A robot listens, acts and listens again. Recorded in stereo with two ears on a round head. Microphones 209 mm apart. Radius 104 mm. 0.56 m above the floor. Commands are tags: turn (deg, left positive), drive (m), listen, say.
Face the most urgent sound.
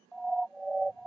<turn deg="30"/>
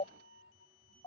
<turn deg="150"/>
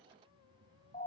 <turn deg="30"/>
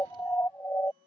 <turn deg="10"/>
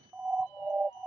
<say>Found it: a siren, straight ahead.</say>